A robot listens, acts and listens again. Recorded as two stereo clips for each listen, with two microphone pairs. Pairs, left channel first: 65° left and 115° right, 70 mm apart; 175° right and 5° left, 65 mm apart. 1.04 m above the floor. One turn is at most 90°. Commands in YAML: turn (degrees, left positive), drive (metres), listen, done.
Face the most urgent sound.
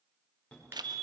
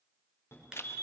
turn: 90
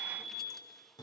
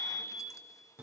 turn: 60
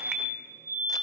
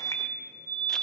turn: 10
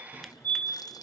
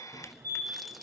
done: "Found it: a fire alarm, straight ahead."